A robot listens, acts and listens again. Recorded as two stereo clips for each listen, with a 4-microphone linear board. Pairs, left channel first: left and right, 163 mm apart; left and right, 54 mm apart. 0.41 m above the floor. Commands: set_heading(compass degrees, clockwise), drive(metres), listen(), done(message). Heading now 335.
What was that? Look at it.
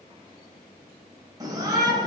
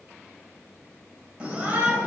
set_heading(0)
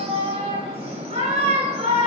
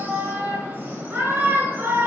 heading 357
set_heading(127)
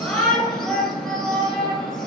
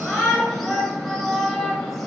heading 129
done("Facing the shout, 2 to 4 m away.")